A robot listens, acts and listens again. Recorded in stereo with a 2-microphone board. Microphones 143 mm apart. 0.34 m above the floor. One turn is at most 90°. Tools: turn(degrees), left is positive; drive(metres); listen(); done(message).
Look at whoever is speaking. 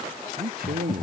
turn(degrees=-90)
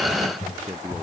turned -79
turn(degrees=-15)
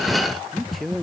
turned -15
done("Facing the man speaking.")